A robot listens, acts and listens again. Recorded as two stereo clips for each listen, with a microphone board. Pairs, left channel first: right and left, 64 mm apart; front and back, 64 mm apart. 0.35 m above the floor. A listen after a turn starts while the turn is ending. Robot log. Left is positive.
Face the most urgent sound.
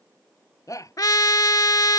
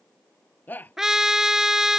note: The shout: 60° right.
cmd yaw -60
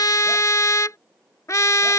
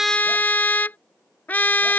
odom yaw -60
cmd idle
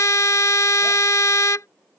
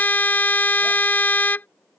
cmd idle
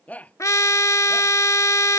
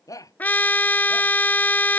note: The shout is now 25° right.
cmd yaw -25
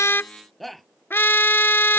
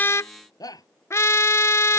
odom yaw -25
end: Facing the shout.